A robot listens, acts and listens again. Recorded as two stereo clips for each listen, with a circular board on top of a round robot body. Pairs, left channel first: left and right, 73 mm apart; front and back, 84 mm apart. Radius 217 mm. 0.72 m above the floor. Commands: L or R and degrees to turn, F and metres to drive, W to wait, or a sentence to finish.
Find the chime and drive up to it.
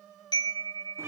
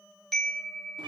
L85
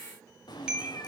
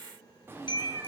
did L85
R15
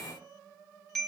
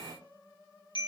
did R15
F1.0
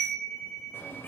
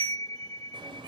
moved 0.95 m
L10
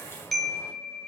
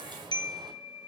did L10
F1.0
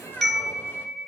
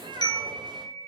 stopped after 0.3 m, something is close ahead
Arrived at the chime, straight ahead.